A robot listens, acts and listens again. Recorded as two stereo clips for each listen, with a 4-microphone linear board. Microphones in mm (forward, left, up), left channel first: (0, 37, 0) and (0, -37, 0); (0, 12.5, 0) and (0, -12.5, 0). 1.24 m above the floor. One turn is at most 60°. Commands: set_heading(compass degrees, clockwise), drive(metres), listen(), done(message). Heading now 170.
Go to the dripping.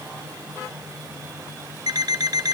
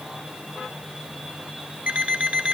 listen()
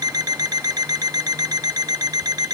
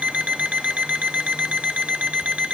listen()
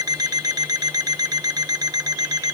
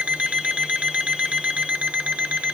done("I can't make out dripping, only an alarm clock.")